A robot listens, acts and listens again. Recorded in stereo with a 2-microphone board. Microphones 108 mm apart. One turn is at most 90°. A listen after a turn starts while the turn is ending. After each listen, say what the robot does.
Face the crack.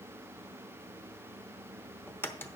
Turn 20° left.
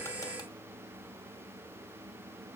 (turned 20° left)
Keep listening.
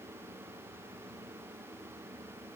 I heard a crack, but can't make it out now. It was about straight ahead or 140° left.